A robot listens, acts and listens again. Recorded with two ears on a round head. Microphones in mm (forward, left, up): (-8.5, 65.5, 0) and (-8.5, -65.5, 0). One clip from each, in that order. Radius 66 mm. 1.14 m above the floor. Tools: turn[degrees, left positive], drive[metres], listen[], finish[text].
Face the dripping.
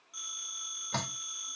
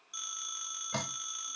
Action: turn[30]
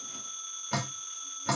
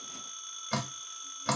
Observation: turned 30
Thought: So it is at 15° right.
Action: turn[-15]
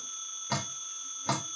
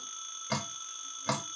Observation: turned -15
Action: finish[Facing the dripping, 2 to 4 m away.]